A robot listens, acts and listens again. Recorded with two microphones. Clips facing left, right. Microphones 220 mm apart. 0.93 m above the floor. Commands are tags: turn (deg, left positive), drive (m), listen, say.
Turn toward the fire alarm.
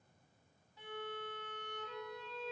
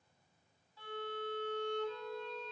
<listen/>
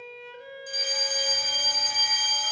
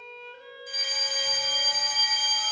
<turn deg="45"/>
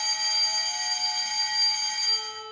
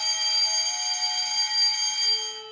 <turn deg="80"/>
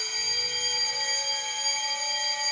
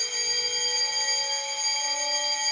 <say>Facing the fire alarm.</say>